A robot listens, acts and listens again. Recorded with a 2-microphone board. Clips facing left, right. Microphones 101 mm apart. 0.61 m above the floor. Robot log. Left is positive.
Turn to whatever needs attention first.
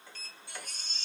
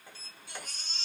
cmd yaw -90
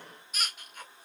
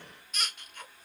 end: Found it: a baby crying, straight ahead, 1 to 2 m away.